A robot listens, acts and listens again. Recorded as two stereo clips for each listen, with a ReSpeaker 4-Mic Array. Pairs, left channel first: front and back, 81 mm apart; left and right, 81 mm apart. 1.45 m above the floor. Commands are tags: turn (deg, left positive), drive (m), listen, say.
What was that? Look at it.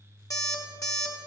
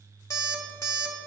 <turn deg="40"/>
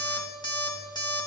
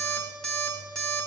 <turn deg="10"/>
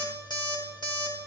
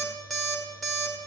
<say>Facing the alarm clock, 1 to 2 m away.</say>